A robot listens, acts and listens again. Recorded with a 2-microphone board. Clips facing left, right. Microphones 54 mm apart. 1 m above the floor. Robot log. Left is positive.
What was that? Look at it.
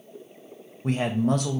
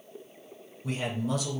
note: The man speaking: about 50° left or 130° left.
cmd yaw +50
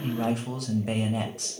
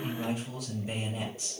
note: So it is at 75° left.
cmd yaw +75
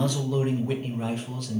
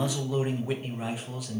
note: The man speaking is now 10° right.
cmd yaw -10
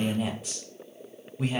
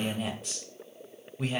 end: Found it: a man speaking, straight ahead, under 1 m away.